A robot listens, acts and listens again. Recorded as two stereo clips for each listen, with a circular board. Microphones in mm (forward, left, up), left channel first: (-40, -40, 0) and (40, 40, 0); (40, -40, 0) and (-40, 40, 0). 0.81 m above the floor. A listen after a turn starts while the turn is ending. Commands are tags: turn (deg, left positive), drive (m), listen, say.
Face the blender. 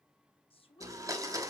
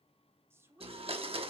<turn deg="105"/>
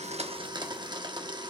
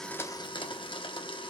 <say>Found it: a blender, straight ahead.</say>